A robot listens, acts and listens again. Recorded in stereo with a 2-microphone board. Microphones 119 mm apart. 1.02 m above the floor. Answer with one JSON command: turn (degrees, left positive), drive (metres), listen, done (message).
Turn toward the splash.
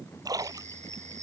{"turn": -30}
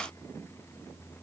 {"listen": true}
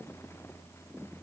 {"done": "I heard a splash, but can't make it out now. It was about straight ahead or 120° right."}